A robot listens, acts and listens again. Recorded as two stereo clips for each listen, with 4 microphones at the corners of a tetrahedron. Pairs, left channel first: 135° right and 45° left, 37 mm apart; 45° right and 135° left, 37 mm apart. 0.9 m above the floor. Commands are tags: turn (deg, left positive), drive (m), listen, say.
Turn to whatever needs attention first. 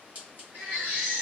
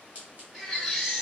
<turn deg="50"/>
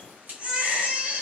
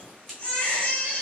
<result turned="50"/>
<say>Facing the baby crying, 1 to 2 m away.</say>